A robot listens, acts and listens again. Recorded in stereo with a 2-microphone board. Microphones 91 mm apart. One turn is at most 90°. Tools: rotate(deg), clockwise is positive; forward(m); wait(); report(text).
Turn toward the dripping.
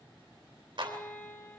wait()
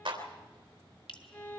rotate(-70)
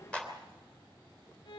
wait()
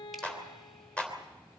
wait()
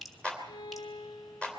report("Facing the dripping.")